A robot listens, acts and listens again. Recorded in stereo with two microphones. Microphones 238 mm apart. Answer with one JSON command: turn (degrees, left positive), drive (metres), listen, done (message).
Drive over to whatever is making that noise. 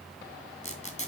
{"turn": 30}
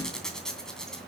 {"drive": 1.0}
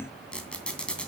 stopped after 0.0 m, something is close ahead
{"done": "Something is in my way. I am facing the squeak but have not reached it."}